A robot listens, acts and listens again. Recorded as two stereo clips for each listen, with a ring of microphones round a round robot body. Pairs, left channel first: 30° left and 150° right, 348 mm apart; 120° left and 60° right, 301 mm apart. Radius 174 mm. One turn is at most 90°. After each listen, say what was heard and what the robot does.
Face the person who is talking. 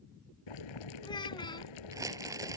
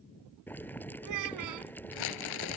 The child speaking: 45° right. Turn 45° right.
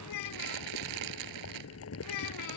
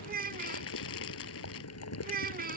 Facing the child speaking.